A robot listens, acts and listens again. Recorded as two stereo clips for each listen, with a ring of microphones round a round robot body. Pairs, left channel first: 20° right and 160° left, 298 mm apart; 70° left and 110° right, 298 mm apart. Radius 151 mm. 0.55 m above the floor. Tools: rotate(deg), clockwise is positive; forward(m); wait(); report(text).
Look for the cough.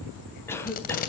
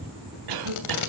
rotate(105)
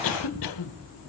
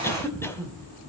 rotate(15)
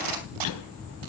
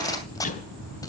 report("Found it: a cough, straight ahead, 2 to 4 m away.")